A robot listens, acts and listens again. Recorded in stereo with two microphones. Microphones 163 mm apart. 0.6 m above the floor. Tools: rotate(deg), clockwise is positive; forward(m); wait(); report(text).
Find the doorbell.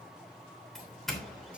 rotate(-30)
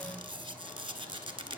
wait()
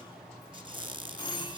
rotate(-145)
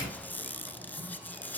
report("Facing the doorbell.")